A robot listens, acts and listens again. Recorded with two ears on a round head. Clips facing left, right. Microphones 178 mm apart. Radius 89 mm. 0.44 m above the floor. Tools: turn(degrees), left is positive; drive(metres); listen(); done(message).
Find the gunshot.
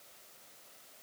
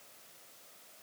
listen()
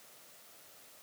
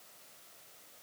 listen()
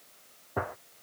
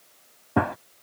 turn(degrees=-90)
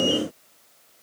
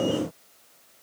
done("Facing where the gunshot came from. I can't hear it now.")